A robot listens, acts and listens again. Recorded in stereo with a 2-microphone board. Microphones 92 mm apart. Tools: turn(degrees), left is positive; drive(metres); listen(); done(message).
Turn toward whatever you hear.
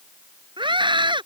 turn(degrees=-60)
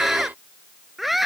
done("Facing the scream.")